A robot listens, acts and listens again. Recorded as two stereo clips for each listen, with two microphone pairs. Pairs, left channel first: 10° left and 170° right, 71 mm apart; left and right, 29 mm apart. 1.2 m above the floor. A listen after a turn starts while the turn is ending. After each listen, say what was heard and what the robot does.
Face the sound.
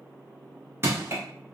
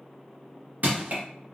The crushing: 115° right. Turn 115° right.
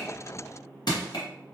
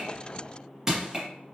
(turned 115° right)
The crushing is now 10° right. Turn 10° right.
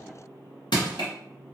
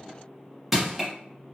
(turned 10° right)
Found it: crushing, straight ahead, under 1 m away.